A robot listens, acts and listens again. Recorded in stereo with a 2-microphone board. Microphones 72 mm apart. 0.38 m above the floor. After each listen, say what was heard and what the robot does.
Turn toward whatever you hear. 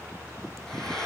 Turn 30° left.
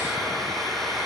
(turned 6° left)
Turn 30° left.
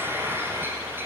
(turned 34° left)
So it is at 30° right. Turn 30° right.
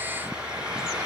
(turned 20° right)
The frying is now 15° right. Turn 15° right.
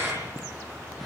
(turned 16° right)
Found it: frying, straight ahead.